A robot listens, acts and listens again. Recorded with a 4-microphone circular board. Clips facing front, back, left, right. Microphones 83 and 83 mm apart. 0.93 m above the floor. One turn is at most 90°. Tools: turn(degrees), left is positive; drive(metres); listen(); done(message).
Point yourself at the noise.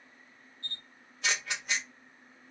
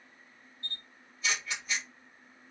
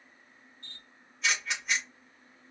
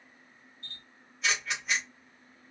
done("Found it: a camera shutter, straight ahead, 1 to 2 m away.")